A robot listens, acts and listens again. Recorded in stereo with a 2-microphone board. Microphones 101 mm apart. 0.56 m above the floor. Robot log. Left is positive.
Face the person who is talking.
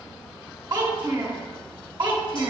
note: The child speaking: about 50° right or 130° right.
cmd yaw -50
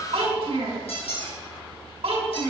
note: So it is at 80° right.
cmd yaw -80
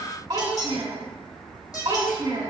note: The child speaking is now 40° right.
cmd yaw -40
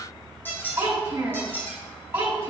note: The child speaking is now 25° right.
cmd yaw -25
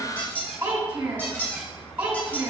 note: The child speaking is now 20° right.
cmd yaw -20
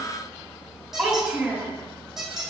end: Found it: a child speaking, straight ahead, 2 to 4 m away.